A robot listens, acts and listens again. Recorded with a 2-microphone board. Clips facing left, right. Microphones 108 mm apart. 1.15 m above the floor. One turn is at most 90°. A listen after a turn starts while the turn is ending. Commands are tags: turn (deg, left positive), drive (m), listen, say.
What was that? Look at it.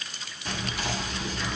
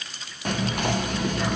<turn deg="-60"/>
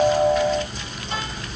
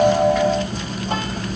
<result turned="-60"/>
<turn deg="-55"/>
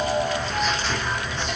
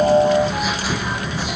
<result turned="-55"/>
<turn deg="-10"/>
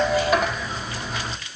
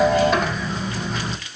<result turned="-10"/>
<say>Facing the whispering, under 1 m away.</say>